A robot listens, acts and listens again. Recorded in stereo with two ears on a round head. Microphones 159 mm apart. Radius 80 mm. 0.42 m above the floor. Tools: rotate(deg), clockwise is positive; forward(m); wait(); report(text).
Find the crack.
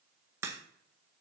rotate(15)
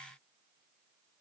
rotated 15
wait()
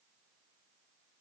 report("I heard a crack, but can't make it out now. It was about straight ahead or 150° right.")